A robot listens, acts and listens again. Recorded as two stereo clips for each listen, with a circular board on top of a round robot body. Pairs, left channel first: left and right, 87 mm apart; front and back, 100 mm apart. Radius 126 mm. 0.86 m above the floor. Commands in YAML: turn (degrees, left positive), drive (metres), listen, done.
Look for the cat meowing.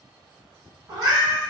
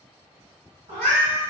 turn: -150
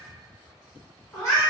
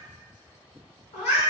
turn: 30
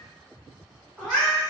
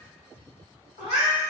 turn: 10
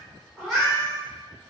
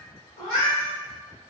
done: "Facing the cat meowing, 1 to 2 m away."